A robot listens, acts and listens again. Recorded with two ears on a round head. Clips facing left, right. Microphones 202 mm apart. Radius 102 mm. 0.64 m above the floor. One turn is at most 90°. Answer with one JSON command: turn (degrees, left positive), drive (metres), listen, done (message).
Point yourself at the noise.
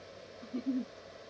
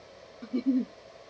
{"turn": -65}
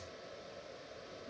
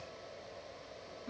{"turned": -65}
{"listen": true}
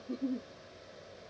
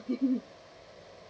{"turn": -45}
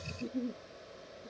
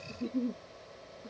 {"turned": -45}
{"turn": -15}
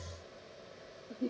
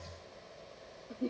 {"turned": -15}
{"done": "Found it: a giggle, straight ahead."}